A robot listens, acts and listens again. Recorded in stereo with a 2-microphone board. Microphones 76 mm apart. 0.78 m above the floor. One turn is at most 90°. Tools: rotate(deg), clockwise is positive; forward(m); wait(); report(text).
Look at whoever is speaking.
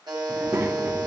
rotate(35)
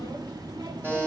rotate(90)
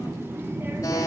rotate(30)
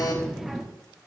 report("Facing the child speaking, 1 to 2 m away.")